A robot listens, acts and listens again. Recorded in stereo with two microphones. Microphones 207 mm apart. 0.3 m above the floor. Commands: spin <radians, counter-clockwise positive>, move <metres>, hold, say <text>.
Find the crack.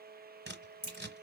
spin 0.87
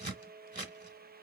hold
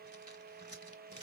say I heard a crack, but can't make it out now. It was about straight ahead or 80° left.